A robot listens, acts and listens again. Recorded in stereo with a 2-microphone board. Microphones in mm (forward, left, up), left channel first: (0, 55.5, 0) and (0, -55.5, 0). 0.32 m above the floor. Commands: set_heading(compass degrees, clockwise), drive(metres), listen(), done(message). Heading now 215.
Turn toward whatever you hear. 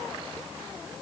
listen()
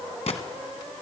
set_heading(145)
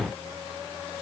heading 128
listen()
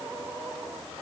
done("I heard a gunshot, but can't make it out now. It was about 15° right or 20° left.")